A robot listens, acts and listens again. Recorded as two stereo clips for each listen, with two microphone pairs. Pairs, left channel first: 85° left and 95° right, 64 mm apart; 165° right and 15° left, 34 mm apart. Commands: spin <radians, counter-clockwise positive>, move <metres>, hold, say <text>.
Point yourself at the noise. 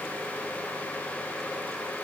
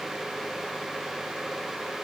hold
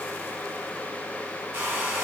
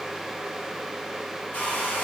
spin -2.53
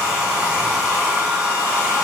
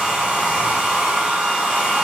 spin -0.52
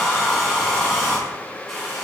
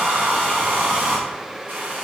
say Found it: a hair dryer, straight ahead, 1 to 2 m away.